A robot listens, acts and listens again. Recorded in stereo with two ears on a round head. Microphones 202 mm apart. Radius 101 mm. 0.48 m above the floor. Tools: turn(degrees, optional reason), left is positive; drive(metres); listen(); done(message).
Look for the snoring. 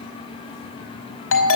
listen()
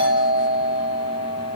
listen()
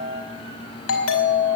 done("I can't make out snoring, only a doorbell.")